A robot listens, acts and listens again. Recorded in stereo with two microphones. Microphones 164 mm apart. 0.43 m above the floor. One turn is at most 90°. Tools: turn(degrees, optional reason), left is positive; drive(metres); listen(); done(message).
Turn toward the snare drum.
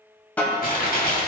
turn(degrees=30)
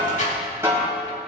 turn(degrees=-20, reason="So it is at 20° right.")
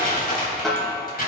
done("Found it: a snare drum, straight ahead, 2 to 4 m away.")